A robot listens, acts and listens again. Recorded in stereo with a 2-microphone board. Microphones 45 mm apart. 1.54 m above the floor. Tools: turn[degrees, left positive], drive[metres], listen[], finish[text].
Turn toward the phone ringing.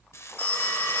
Thought: The phone ringing: about 30° left or 150° left.
Action: turn[30]
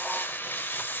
Action: listen[]
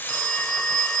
Thought: So it is at 10° left.
Action: turn[10]
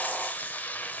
Action: listen[]
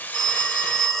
Action: finish[Facing the phone ringing.]